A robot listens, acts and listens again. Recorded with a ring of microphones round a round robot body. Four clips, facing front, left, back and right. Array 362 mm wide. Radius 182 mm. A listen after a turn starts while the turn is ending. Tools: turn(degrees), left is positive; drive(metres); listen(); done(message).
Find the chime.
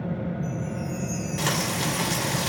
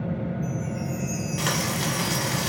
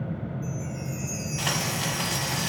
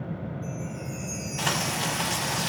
turn(degrees=170)
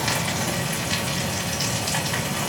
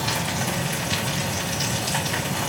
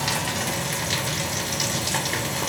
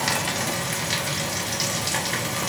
listen()
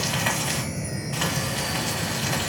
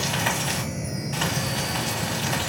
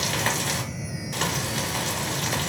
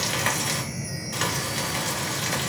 done("Found it: a chime, straight ahead, under 1 m away.")